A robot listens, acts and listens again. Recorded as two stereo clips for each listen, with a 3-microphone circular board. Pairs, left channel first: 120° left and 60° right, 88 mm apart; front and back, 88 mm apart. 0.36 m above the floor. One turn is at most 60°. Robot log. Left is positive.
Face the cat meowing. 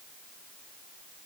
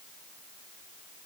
cmd idle
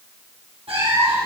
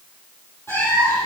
note: The cat meowing: 65° right.
cmd yaw -60
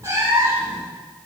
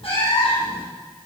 end: Facing the cat meowing, over 4 m away.